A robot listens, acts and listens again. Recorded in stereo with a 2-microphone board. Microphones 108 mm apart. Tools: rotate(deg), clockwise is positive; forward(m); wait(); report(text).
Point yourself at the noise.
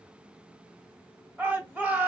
rotate(15)
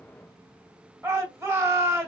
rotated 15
rotate(155)
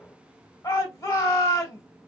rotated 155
rotate(-40)
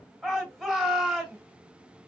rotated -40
report("Found it: a shout, straight ahead.")